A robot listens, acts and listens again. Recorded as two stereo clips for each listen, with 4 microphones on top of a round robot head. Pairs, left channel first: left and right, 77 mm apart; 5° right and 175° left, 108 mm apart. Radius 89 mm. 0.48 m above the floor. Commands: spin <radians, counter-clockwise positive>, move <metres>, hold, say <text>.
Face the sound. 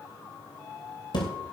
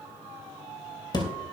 spin 0.87
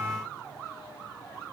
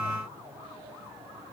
say I heard a thud from this way, but can't make it out now.